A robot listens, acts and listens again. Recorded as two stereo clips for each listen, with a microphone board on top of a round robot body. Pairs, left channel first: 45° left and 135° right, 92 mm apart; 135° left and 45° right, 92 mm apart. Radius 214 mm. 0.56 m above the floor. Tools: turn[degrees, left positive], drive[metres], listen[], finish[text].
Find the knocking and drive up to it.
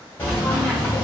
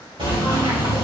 Thought: The knocking: 25° right.
Action: turn[-25]
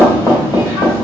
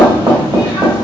Thought: The knocking is now 10° right.
Action: turn[-10]
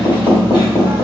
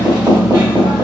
Action: drive[1.0]
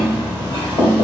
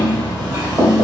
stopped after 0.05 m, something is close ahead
Action: finish[Blocked. The knocking is further on, straight ahead.]